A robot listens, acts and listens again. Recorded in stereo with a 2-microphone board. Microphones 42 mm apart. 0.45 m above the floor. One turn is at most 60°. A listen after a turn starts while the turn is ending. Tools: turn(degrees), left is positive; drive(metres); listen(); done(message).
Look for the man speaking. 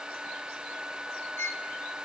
listen()
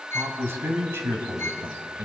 turn(degrees=-60)
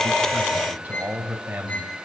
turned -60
turn(degrees=-50)
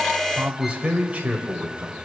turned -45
turn(degrees=-30)
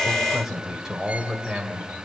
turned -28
done("Facing the man speaking, 2 to 4 m away.")